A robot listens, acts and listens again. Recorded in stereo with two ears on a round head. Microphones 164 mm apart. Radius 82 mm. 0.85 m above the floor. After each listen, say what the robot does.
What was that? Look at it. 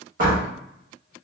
Turn 50° right.
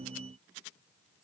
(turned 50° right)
Keep listening.
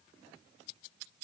I heard a door slam, but can't make it out now. It was about straight ahead or 80° right.